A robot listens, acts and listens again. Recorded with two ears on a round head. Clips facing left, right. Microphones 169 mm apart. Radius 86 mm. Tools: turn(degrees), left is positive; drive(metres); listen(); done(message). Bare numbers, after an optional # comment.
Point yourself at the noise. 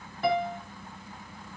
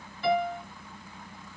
# The piano: about 40° left or 140° left.
turn(40)
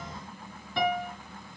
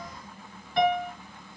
# So it is at 100° left.
turn(100)
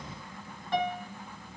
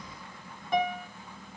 # The piano is now 10° right.
turn(-10)
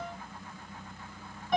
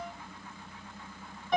done("Found it: a piano, straight ahead, 2 to 4 m away.")